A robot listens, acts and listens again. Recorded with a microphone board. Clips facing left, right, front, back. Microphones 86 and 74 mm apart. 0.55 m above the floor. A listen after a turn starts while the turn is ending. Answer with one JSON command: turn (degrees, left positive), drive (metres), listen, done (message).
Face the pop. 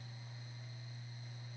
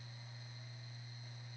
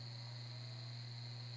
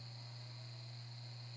{"listen": true}
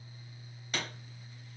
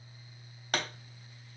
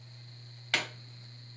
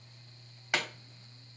{"turn": -105}
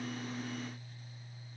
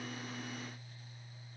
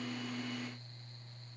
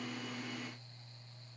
{"done": "I heard a pop from this way, but can't make it out now."}